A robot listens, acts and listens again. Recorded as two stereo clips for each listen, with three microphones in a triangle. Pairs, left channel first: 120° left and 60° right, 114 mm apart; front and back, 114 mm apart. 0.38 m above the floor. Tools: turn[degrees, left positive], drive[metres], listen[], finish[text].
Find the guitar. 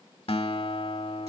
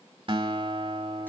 Thought: The guitar: 145° left.
Action: turn[145]
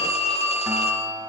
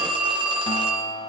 Action: finish[Found it: a guitar, straight ahead.]